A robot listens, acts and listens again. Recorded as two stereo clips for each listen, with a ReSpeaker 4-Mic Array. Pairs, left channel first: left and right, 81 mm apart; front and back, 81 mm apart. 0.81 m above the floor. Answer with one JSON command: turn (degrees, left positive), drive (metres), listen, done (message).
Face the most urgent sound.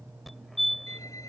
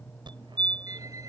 {"turn": 180}
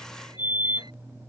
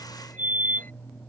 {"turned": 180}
{"turn": -25}
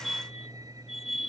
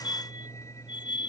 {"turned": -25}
{"done": "Facing the fire alarm."}